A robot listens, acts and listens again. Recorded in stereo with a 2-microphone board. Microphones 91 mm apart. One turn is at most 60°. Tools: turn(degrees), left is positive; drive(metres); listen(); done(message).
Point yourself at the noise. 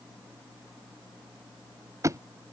turn(degrees=-35)
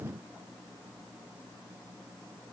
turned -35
listen()
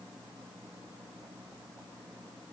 done("I heard a thud, but can't make it out now. It was about straight ahead or 110° right.")